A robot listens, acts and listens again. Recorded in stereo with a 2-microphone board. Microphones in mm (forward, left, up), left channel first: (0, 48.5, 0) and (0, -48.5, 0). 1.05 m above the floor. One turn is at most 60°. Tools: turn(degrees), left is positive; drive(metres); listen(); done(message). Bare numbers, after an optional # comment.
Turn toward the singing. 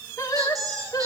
# The singing: about 45° left or 135° left.
turn(45)
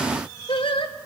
# So it is at 80° left.
turn(60)
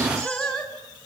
done("Found it: singing, straight ahead.")